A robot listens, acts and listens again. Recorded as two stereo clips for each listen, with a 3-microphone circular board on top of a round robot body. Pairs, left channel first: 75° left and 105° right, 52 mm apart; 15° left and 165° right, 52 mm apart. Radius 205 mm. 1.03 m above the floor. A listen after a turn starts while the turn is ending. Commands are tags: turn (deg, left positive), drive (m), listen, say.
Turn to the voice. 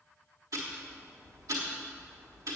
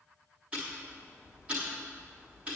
<listen/>
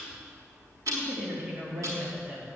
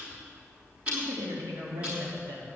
<turn deg="175"/>
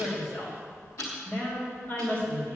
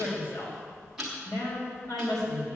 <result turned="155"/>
<turn deg="20"/>
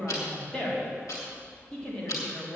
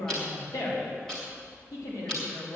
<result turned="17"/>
<say>Found it: a woman speaking, straight ahead.</say>